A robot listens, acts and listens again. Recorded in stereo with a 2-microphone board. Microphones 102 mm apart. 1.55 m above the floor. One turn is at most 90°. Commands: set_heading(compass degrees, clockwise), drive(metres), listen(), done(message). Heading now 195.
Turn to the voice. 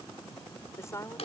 set_heading(165)
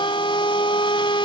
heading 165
listen()
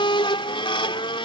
listen()
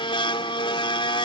done("I heard a woman speaking, but can't make it out now. It was about straight ahead or 120° left.")